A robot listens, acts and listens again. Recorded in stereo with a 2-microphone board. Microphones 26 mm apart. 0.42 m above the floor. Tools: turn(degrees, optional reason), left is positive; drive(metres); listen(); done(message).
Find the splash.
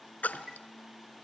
turn(degrees=90)
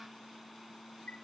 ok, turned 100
turn(degrees=-10, reason="Nothing new. It was at 10° right.")
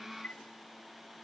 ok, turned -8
done("Facing where the splash came from. I can't hear it now.")